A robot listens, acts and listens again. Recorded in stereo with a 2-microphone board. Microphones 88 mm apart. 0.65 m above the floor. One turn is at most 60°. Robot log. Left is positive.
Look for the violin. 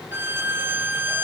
note: The violin: about 25° right or 155° right.
cmd yaw -25
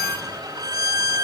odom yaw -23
note: So it is at 135° right.
cmd yaw -60
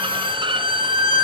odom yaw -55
note: The violin is now 80° right.
cmd yaw -60
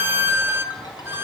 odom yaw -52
note: The violin is now 25° right.
cmd yaw -25
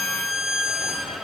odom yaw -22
end: Facing the violin.